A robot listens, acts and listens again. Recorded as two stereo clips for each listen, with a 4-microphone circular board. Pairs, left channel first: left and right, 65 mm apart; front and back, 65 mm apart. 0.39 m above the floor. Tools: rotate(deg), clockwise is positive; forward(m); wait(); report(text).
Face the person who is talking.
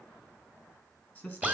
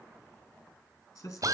rotate(-20)
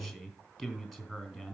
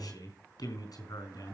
report("Facing the man speaking, 2 to 4 m away.")